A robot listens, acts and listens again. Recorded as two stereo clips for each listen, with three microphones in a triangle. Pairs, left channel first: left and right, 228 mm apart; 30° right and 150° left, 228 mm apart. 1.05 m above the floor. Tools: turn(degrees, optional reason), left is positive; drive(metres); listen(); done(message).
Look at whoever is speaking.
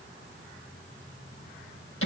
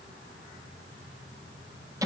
listen()
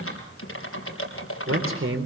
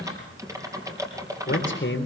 turn(degrees=-65, reason="The man speaking: 65° right.")
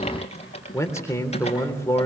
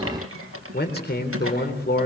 turn(degrees=10, reason="The man speaking is now 10° left.")
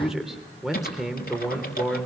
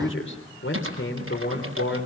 done("Found it: a man speaking, straight ahead, 2 to 4 m away.")